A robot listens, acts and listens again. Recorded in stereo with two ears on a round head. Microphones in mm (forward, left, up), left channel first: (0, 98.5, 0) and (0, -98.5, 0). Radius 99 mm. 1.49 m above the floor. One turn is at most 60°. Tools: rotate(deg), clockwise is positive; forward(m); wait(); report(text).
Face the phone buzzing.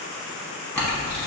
wait()
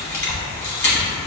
wait()
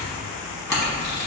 report("I can't make out a phone buzzing to turn to.")